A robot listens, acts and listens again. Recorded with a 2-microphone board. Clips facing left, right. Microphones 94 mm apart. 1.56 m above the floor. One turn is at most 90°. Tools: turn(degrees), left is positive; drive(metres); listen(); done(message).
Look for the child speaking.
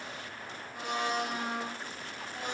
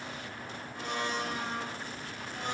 listen()
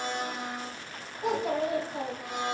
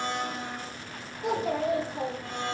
turn(degrees=65)
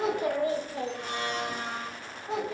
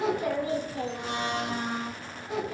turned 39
turn(degrees=40)
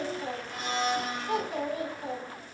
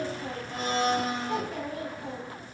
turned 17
turn(degrees=25)
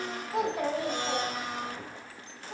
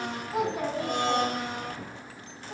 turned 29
done("Facing the child speaking, 2 to 4 m away.")